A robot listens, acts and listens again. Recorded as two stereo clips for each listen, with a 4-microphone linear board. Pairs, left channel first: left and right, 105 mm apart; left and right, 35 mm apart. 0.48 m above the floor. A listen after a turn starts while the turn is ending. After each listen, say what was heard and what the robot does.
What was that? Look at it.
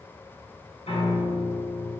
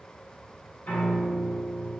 Turn 90° left.
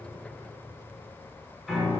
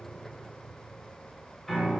Found it: a piano, straight ahead, 1 to 2 m away.